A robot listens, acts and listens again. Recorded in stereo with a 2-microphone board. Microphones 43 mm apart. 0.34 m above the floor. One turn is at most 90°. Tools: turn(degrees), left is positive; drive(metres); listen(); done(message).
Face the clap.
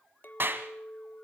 turn(degrees=-50)
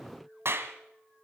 turn(degrees=-75)
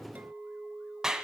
turn(degrees=-20)
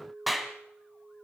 done("Found it: a clap, straight ahead, 1 to 2 m away.")